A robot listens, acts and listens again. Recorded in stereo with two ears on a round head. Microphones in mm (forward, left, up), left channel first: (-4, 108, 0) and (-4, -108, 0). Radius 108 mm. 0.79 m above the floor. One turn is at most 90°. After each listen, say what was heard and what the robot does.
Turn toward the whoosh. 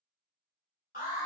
Keep listening.
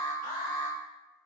Keep listening.
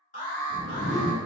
The whoosh: about 30° right or 150° right. Turn 30° right.
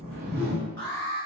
So it is at 115° right. Turn 90° right.
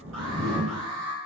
The whoosh is now 30° right. Turn 30° right.
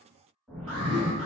Facing the whoosh, 1 to 2 m away.